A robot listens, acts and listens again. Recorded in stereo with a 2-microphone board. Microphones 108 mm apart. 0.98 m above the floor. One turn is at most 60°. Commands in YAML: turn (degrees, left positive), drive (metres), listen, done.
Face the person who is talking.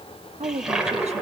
turn: -60
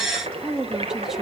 turn: -10
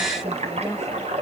listen: true
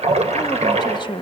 turn: 45
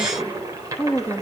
turn: 15
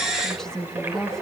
done: "Facing the woman speaking, 1 to 2 m away."